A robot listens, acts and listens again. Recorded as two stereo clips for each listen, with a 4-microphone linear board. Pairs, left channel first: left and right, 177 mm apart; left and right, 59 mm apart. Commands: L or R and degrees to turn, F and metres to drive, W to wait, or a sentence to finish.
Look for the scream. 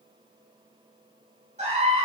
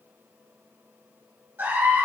R40
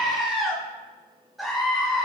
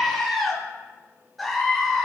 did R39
Found it: a scream, straight ahead.